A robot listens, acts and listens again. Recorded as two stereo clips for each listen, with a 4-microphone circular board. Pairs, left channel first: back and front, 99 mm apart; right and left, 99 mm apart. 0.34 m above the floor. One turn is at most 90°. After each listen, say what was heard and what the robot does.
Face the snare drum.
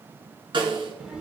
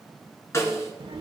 The snare drum: 30° right. Turn 30° right.
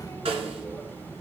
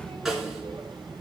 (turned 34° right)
Found it: a snare drum, straight ahead.